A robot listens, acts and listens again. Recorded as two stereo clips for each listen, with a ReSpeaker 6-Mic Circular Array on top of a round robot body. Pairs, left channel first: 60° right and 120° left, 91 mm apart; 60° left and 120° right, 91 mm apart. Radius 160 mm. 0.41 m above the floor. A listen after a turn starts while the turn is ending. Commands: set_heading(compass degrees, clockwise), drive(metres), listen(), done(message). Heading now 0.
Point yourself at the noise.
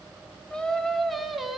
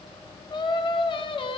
set_heading(325)
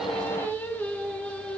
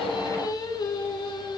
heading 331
set_heading(316)
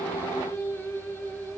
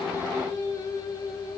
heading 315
set_heading(305)
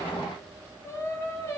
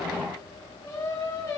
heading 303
done("Found it: singing, straight ahead.")